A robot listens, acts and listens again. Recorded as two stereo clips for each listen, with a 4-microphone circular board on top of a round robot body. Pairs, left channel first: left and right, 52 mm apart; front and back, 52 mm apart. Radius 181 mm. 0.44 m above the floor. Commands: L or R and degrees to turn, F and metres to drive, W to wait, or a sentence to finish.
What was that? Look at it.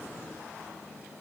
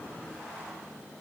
W
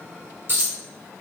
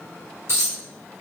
R50
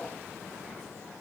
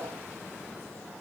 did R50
Facing where the dropped coin came from. I can't hear it now.